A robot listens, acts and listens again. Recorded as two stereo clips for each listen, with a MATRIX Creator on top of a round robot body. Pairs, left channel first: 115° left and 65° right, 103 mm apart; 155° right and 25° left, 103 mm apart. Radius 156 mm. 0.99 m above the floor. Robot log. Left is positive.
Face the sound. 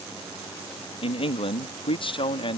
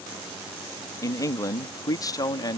note: The man speaking: 150° left.
cmd yaw +150
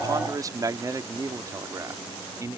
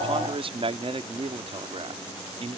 end: Found it: a man speaking, straight ahead.